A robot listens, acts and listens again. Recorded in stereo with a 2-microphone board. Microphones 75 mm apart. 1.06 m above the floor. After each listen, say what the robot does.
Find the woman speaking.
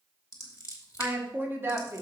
Turn 35° right.
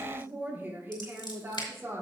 Turn 35° right.
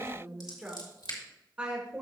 Turn 15° right.
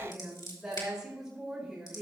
Found it: a woman speaking, straight ahead.